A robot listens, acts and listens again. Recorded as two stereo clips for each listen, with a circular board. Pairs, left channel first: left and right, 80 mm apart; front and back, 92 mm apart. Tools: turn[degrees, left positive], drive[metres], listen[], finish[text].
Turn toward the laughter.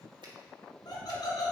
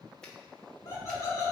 Thought: The laughter: 55° left.
Action: turn[55]
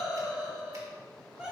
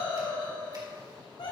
Thought: The laughter is now 10° right.
Action: turn[-10]
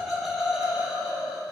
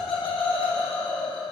Thought: The laughter is now 10° right.
Action: turn[-10]
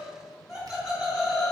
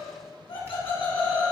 Thought: The laughter is now 10° right.
Action: turn[-10]
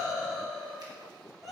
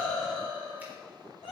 Action: finish[Facing the laughter, 2 to 4 m away.]